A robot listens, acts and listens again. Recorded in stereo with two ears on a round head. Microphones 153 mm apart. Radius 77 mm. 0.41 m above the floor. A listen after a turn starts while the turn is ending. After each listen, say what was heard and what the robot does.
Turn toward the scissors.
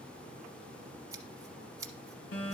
The scissors: about 20° right or 160° right. Turn 20° right.
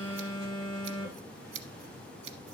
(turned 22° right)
So it is at 140° right. Turn 140° right.
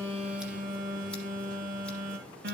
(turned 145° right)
Keep listening.
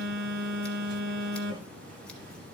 Keep listening.
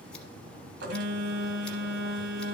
Facing where the scissors came from. I can't hear it now.